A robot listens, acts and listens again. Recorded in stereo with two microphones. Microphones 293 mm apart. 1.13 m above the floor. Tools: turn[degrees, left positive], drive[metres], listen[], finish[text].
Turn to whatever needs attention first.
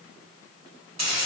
Action: listen[]
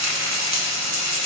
Action: listen[]
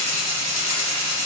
Action: finish[I can't make out anything urgent to turn to.]